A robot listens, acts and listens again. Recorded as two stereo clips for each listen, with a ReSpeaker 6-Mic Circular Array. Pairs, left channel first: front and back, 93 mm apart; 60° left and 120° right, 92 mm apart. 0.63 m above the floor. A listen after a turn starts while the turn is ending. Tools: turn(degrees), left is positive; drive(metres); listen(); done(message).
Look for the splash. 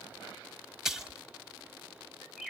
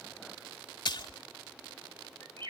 turn(degrees=95)
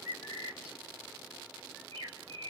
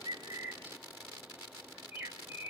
done("Facing where the splash came from. I can't hear it now.")